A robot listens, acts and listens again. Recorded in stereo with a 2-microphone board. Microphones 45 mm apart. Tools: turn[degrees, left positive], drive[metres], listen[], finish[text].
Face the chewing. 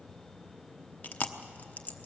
Thought: The chewing: about 35° left or 145° left.
Action: turn[35]
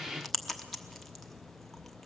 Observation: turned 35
Action: finish[Facing the chewing.]